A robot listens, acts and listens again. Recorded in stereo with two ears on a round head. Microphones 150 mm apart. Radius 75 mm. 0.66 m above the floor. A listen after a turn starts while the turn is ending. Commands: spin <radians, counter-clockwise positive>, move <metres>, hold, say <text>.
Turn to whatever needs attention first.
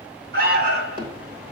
spin -1.05
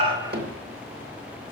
hold
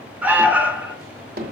spin -0.17
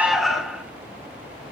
say Found it: an alarm, straight ahead.